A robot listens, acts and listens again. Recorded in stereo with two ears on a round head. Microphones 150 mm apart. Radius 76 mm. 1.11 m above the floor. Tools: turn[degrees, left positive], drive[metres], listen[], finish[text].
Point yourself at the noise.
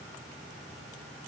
Action: listen[]
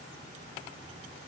Action: listen[]
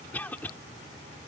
Action: turn[30]
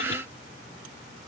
Action: listen[]
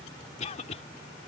Thought: So it is at 135° left.
Action: turn[135]
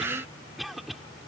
Action: finish[Facing the cough.]